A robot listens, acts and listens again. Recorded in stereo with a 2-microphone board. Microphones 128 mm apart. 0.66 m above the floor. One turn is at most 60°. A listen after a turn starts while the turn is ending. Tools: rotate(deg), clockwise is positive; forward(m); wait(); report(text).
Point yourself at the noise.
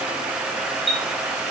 rotate(40)
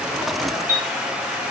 rotate(60)
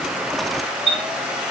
rotate(55)
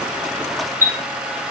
rotate(20)
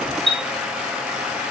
report("Found it: a chime, straight ahead.")